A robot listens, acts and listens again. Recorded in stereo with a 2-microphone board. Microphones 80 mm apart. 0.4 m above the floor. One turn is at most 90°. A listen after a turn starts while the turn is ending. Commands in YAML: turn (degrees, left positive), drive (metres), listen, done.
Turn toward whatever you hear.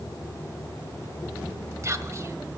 turn: -40
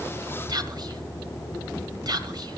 turn: -90
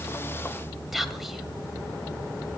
done: "Found it: whispering, straight ahead, 1 to 2 m away."